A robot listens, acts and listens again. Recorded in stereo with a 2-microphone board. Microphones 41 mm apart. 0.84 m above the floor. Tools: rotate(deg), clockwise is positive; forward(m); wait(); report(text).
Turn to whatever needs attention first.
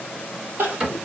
rotate(75)
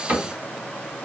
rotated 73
wait()
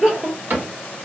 rotate(20)
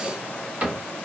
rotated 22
wait()
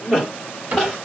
report("Facing the crying.")